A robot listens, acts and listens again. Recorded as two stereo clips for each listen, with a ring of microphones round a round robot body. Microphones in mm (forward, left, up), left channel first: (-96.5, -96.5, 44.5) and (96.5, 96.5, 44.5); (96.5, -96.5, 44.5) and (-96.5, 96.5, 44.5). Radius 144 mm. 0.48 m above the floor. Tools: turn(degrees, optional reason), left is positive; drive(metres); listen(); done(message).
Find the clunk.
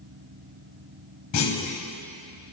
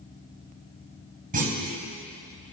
turn(degrees=-165, reason="The clunk: 165° right.")
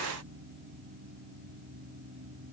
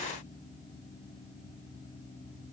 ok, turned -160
done("Facing where the clunk came from. I can't hear it now.")